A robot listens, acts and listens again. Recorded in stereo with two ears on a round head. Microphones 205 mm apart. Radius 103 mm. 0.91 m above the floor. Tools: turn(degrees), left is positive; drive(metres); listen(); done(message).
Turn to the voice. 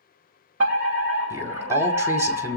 turn(degrees=-30)
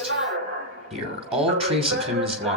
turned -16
turn(degrees=-150)
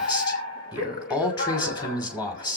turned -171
turn(degrees=20)
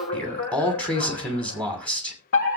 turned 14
done("Found it: a man speaking, straight ahead.")